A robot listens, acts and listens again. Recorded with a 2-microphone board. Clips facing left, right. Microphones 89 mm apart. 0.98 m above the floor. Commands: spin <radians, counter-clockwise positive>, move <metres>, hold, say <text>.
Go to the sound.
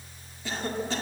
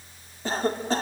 spin -0.70
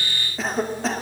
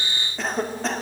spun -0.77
move 1.0
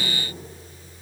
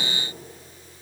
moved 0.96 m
hold
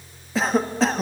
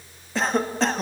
move 1.0
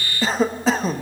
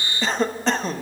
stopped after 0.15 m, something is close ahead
say Arrived at the cough, straight ahead.